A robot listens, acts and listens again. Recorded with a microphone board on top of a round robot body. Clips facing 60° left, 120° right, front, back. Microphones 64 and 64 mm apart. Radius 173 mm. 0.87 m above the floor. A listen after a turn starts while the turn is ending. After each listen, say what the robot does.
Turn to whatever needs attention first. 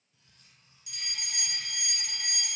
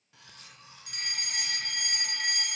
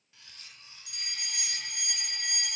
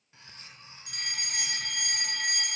Turn 155° right.
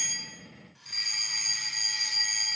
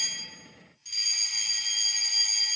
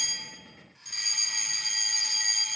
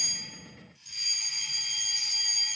Turn 10° left.
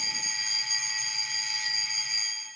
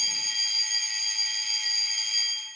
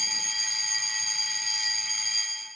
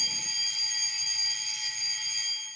Facing the fire alarm, 2 to 4 m away.